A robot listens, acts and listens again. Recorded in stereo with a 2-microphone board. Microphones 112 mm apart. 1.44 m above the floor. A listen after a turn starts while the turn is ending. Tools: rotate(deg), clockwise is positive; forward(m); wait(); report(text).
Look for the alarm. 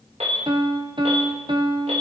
rotate(90)
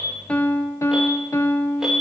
report("Found it: an alarm, straight ahead.")